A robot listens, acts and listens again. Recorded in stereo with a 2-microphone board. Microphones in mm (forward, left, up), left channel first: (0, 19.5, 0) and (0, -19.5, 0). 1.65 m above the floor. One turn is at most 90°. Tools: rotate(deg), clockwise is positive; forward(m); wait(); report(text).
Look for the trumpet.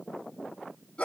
wait()
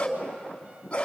wait()
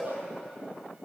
report("I can't make out a trumpet, only a dog barking.")